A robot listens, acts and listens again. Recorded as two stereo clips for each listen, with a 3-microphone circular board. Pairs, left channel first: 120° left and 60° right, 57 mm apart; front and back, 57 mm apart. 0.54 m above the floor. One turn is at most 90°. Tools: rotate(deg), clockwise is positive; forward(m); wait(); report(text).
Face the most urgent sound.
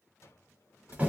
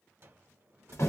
wait()
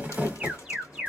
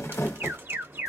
rotate(90)
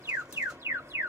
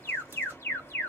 rotate(45)
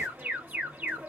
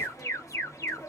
report("Found it: an alarm, straight ahead, 1 to 2 m away.")